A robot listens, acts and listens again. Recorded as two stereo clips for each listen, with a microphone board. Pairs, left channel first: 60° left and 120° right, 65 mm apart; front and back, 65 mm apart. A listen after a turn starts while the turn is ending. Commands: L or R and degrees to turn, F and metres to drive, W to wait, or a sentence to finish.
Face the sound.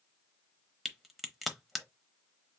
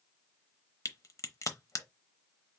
R30
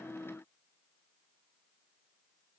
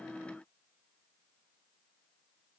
I heard a crack from this way, but can't make it out now.